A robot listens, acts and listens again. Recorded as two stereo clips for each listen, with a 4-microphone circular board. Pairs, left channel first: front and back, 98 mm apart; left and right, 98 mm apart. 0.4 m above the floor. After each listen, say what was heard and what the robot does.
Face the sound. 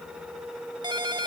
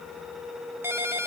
The ringtone: 150° right. Turn 150° right.
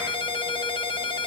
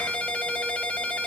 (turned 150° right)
The ringtone is now 15° left. Turn 15° left.
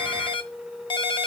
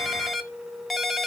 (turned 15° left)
Facing the ringtone.